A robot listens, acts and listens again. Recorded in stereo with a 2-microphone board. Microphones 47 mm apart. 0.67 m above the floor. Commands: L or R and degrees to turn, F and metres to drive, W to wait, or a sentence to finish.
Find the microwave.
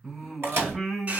R55
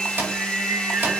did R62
R60
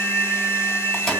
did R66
W
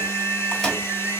W
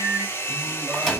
Facing where the microwave came from. I can't hear it now.